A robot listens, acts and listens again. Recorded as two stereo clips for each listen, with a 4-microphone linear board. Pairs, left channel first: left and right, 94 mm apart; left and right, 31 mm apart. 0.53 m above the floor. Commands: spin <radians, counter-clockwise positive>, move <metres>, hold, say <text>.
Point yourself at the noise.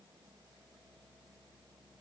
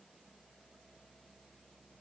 hold
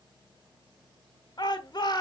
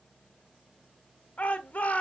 spin 0.87
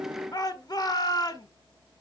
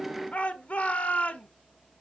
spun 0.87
spin 1.05
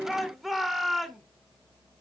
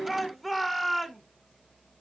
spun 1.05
say Found it: a shout, straight ahead.